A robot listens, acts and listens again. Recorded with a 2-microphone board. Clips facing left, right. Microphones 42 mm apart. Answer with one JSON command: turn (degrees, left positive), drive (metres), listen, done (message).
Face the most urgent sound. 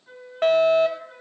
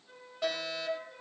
{"turn": 50}
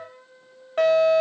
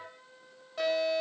{"turn": 65}
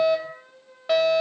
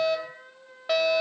{"done": "Found it: a fire alarm, straight ahead."}